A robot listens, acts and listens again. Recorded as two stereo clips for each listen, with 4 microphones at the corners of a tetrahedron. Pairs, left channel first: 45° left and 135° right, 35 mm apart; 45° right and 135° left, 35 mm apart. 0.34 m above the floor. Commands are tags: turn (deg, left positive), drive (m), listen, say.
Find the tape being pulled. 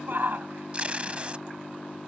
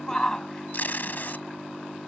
<turn deg="-80"/>
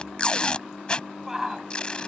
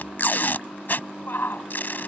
<turn deg="-15"/>
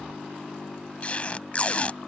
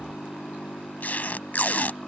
<say>Facing the tape being pulled.</say>